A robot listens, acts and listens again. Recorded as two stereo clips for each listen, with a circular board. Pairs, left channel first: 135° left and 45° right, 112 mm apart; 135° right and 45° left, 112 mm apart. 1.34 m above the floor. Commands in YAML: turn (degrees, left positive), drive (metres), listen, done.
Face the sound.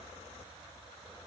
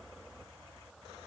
listen: true
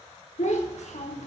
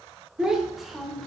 turn: 140
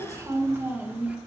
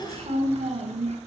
turn: 30
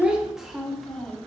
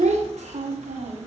turn: 50
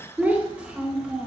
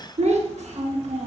turn: 35
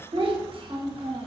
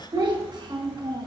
done: "Found it: a child speaking, straight ahead, 1 to 2 m away."